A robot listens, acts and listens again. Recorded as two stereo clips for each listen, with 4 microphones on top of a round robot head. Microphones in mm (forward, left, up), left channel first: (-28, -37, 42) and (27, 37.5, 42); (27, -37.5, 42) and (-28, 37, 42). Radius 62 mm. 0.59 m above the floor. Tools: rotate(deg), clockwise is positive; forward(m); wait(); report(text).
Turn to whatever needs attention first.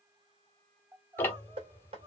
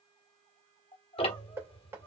rotate(10)
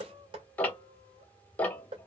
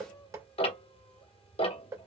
wait()
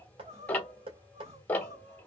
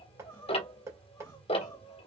report("Found it: crying, straight ahead.")